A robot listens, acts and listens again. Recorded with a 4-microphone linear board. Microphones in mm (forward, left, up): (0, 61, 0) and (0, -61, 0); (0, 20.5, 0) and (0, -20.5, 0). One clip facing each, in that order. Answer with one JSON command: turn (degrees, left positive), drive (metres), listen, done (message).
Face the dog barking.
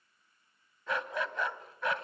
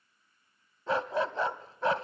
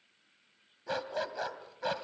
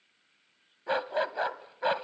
{"turn": -35}
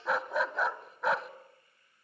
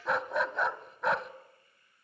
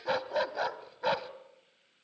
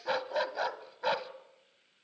{"done": "Found it: a dog barking, straight ahead, 1 to 2 m away."}